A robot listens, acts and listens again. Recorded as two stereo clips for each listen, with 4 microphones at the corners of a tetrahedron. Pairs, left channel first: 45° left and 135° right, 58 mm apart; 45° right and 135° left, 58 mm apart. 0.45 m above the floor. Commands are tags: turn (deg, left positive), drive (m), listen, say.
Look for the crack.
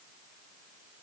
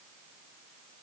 <listen/>
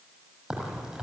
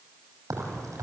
<turn deg="150"/>
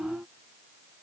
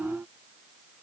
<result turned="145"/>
<say>Facing where the crack came from. I can't hear it now.</say>